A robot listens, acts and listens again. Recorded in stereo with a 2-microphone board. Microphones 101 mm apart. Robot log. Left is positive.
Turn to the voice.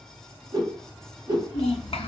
note: The child speaking: about 75° left or 105° left.
cmd yaw +75
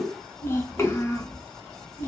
note: So it is at 25° left.
cmd yaw +25
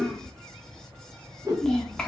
note: The child speaking is now 10° left.
cmd yaw +10
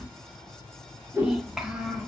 end: Facing the child speaking.